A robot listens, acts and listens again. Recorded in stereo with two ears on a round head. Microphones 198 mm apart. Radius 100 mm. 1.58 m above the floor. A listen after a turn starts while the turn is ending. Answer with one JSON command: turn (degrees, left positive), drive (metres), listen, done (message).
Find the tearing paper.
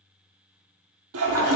{"listen": true}
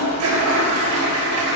{"listen": true}
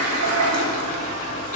{"done": "I can't make out tearing paper, only a toilet flushing."}